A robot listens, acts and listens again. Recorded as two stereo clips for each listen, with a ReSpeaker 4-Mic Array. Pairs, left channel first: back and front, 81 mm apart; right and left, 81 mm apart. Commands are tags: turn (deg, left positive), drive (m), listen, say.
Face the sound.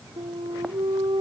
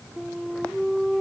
<say>Facing the flute.</say>